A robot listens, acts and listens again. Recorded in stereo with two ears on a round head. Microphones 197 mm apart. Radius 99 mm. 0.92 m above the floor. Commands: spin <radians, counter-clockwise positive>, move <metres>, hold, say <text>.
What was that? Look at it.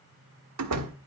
spin -1.57
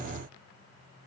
say Facing where the door slam came from. I can't hear it now.